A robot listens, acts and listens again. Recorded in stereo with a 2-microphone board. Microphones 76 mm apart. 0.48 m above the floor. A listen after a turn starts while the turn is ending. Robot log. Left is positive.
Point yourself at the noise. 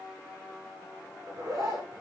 note: The zipper: about 55° right or 125° right.
cmd yaw -55
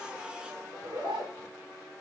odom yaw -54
note: So it is at 70° right.
cmd yaw -70
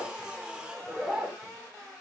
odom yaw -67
end: Found it: a zipper, straight ahead.